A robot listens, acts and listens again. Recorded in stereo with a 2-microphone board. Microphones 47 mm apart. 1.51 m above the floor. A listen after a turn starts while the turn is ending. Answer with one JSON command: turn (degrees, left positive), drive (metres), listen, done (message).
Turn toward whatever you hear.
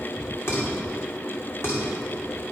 {"turn": 60}
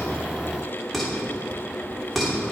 {"done": "Found it: dishes clattering, straight ahead."}